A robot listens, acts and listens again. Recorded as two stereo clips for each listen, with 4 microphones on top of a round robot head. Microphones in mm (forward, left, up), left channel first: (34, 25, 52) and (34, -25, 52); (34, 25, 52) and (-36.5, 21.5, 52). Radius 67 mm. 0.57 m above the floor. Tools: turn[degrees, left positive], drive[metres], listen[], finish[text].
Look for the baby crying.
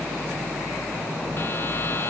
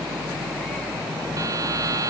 Action: listen[]
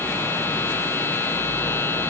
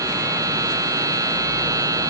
Action: listen[]
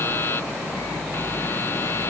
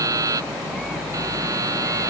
Action: finish[I can't make out a baby crying to turn to.]